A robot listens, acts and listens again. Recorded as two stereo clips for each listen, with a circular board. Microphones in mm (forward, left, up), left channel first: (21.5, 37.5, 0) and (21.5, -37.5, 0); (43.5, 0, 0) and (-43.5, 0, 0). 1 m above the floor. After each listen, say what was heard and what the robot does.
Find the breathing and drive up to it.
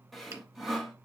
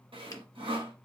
Keep listening.
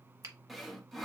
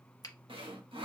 Keep listening.
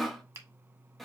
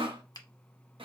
I can't make out breathing, only sawing and a finger snap.